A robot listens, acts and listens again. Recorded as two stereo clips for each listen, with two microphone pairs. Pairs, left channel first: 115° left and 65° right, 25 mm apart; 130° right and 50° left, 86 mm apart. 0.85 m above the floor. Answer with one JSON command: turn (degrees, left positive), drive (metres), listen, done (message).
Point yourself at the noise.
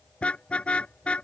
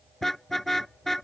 {"turn": 145}
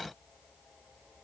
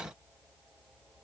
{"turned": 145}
{"listen": true}
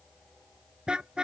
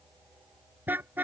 {"turn": -15}
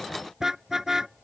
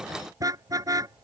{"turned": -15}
{"done": "Found it: a car horn, straight ahead."}